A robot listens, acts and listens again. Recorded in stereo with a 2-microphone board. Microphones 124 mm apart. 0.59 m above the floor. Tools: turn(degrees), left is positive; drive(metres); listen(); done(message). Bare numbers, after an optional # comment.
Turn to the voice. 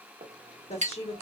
# The woman speaking: about 60° left or 120° left.
turn(60)
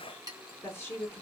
# So it is at 20° left.
turn(20)
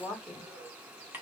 done("Found it: a woman speaking, straight ahead.")